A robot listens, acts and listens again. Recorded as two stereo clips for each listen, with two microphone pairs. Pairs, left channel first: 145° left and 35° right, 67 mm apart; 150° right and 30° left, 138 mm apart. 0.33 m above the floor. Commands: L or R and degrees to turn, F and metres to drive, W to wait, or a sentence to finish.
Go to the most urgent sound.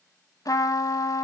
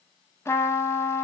W
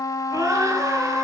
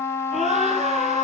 F1.0
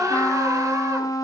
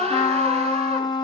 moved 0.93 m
R10
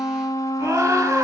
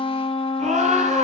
F1.0
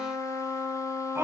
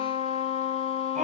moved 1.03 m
L10
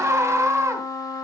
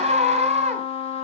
F1.0
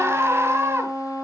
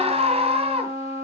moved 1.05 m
F1.0
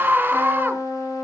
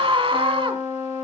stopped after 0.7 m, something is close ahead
Arrived at the scream, straight ahead.